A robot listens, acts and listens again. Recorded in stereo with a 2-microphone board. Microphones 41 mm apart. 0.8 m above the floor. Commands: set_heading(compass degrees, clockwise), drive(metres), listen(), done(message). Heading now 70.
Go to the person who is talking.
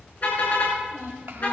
set_heading(140)
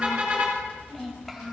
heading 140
drive(1.0)
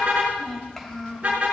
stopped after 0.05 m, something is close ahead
done("Something is in my way. I am facing the child speaking but have not reached it.")